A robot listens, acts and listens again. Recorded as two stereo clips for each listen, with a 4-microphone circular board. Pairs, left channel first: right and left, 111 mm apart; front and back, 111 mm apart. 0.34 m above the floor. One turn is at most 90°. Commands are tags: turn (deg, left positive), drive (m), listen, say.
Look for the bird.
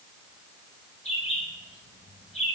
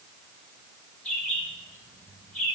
<turn deg="-80"/>
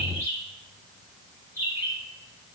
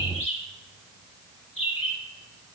<turn deg="25"/>
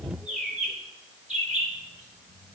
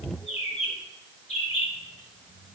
<say>Found it: a bird, straight ahead.</say>